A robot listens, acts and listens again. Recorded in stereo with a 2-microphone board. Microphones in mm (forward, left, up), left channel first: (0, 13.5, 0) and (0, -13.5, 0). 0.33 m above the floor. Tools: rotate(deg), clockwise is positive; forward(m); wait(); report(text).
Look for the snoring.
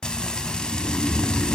rotate(-75)
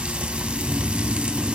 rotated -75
rotate(-15)
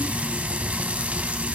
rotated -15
wait()
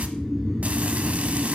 report("Facing the snoring.")